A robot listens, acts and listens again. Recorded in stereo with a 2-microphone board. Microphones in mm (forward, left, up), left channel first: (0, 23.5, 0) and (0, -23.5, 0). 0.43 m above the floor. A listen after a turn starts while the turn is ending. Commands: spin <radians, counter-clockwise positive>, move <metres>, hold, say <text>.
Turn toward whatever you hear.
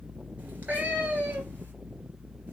spin -0.61
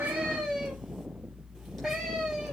say Found it: a cat meowing, straight ahead.